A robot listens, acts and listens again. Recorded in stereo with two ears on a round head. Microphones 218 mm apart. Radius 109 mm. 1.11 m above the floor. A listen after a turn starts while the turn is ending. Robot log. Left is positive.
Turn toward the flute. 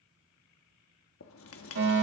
cmd idle
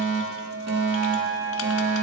note: The flute: about 45° right or 135° right.
cmd yaw -45
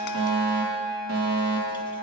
end: Facing the flute.